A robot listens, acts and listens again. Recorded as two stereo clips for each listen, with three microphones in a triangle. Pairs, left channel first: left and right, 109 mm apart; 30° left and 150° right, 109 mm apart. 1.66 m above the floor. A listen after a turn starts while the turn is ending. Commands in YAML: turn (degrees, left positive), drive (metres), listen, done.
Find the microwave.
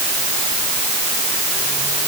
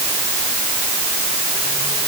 listen: true
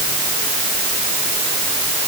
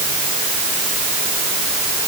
listen: true
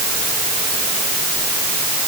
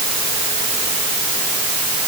done: "I can't make out a microwave to turn to."